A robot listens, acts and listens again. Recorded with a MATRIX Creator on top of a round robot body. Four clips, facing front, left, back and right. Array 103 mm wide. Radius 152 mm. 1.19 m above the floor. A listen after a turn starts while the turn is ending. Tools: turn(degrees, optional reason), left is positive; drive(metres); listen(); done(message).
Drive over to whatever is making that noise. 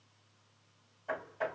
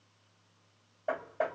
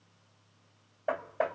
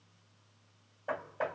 turn(degrees=160, reason="The hammering: 160° left.")
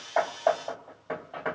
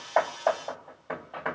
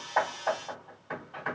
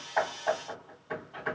turn(degrees=45, reason="The hammering is now 45° left.")
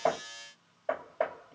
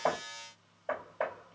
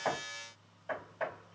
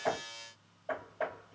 turn(degrees=15, reason="The hammering is now 15° left.")
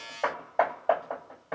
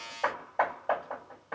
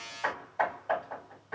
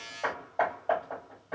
drive(metres=1.0)
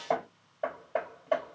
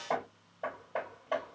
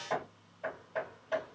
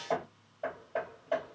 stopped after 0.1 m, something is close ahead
done("Something is in my way. I am facing the hammering but have not reached it.")